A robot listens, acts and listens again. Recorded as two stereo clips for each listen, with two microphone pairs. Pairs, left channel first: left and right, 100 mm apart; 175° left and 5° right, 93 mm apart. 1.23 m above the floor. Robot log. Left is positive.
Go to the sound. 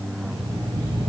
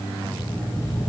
note: The alarm clock: 40° right.
cmd yaw -40
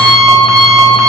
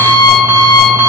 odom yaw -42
cmd fwd 1.0
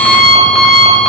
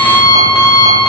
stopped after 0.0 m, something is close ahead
end: Blocked. The alarm clock is further on, straight ahead.